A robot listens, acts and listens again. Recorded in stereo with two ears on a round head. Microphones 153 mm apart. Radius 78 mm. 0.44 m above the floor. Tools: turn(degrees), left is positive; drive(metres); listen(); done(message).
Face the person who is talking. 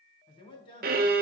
turn(degrees=30)
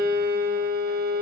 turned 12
listen()
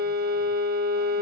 listen()
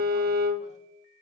done("I heard a man speaking, but can't make it out now. It was about 20° left or 135° left.")